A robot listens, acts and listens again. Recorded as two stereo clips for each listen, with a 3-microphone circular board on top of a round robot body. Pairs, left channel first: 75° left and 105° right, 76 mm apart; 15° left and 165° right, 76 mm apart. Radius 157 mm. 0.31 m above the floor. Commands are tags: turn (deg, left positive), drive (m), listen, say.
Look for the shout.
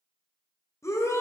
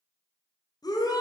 <turn deg="30"/>
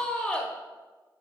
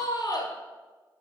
<say>Facing the shout.</say>